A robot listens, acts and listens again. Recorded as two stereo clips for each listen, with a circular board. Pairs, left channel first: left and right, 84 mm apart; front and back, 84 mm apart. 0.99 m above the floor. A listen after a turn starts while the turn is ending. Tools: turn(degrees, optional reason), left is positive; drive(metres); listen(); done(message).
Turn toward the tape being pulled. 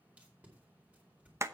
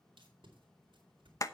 turn(degrees=-165, reason="The tape being pulled: 165° right.")
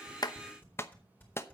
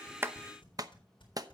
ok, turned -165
turn(degrees=20, reason="The tape being pulled is now 20° left.")
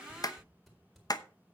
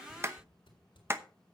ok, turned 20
done("Found it: tape being pulled, straight ahead.")